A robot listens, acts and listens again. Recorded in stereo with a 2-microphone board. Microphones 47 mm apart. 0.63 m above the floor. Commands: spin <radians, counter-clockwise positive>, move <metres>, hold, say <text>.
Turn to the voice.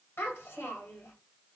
spin 1.05
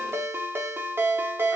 hold
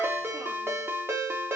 hold
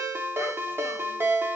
say I heard a child speaking, but can't make it out now. It was about straight ahead or 60° left.